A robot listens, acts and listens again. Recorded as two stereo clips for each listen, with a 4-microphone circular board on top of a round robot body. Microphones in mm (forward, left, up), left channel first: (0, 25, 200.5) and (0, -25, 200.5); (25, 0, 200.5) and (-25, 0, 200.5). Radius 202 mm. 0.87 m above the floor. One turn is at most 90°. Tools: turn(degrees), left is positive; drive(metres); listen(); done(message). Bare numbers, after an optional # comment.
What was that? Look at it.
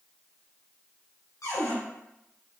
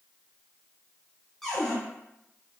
# The cupboard door: 85° left.
turn(85)
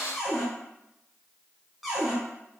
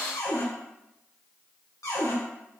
done("Facing the cupboard door, 2 to 4 m away.")